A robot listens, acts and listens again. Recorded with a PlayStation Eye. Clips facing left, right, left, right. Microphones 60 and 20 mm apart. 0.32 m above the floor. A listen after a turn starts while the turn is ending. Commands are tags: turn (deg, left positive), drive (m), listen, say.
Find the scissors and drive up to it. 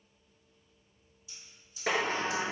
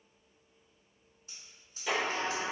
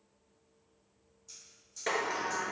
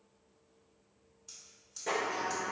<turn deg="-45"/>
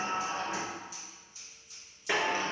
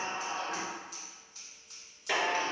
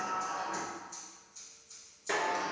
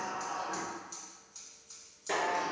<turn deg="-75"/>
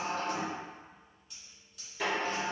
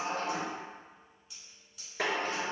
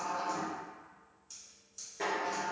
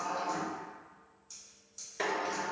<drive m="1.0"/>
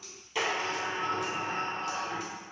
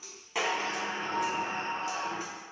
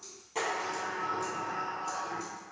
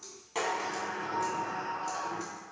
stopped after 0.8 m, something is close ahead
<listen/>
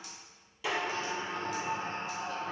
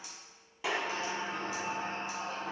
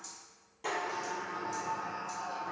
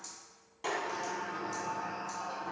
<listen/>
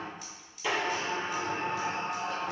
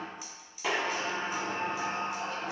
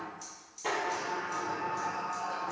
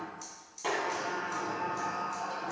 <say>Arrived at the scissors, straight ahead.</say>